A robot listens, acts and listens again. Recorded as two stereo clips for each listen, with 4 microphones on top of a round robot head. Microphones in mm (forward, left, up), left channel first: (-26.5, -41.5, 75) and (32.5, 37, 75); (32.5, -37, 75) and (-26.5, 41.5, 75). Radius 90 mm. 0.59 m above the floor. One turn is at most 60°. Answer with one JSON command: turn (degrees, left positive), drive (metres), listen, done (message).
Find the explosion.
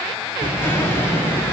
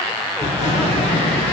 {"turn": -60}
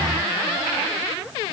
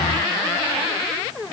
{"done": "I heard an explosion from this way, but can't make it out now."}